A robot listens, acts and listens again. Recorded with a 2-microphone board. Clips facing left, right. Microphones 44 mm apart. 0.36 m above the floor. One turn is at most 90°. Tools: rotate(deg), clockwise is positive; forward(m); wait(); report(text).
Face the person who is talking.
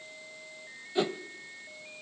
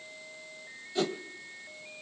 wait()
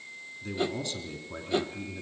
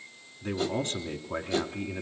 rotate(40)
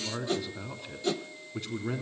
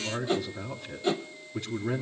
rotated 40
report("Facing the man speaking.")